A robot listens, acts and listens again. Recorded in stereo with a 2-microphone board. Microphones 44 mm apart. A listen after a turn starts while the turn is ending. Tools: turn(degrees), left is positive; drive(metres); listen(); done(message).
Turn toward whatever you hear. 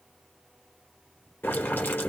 turn(degrees=50)
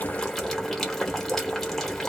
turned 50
done("Found it: boiling, straight ahead.")